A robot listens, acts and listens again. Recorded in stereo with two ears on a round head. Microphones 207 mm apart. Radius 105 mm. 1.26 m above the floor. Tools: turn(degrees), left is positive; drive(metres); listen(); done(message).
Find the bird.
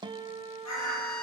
turn(degrees=90)
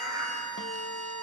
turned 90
turn(degrees=-10)
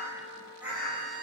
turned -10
done("Facing the bird, over 4 m away.")